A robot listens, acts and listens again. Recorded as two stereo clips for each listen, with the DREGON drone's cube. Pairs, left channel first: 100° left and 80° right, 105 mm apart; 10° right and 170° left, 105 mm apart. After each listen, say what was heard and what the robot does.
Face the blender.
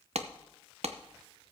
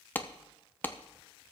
Keep listening.
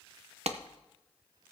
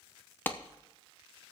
Keep listening.
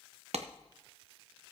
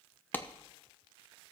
I can't make out a blender, only a clap.